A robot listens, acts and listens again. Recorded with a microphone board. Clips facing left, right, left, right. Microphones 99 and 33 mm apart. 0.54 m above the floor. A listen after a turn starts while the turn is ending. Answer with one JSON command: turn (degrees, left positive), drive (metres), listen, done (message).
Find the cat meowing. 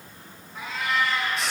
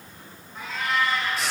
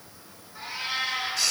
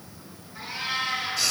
{"turn": 30}
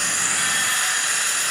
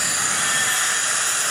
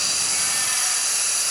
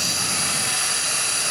{"listen": true}
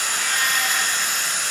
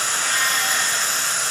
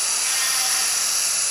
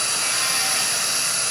{"listen": true}
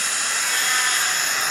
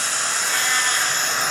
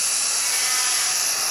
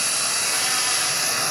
{"done": "I heard a cat meowing, but can't make it out now. It was about 25° right or 145° left."}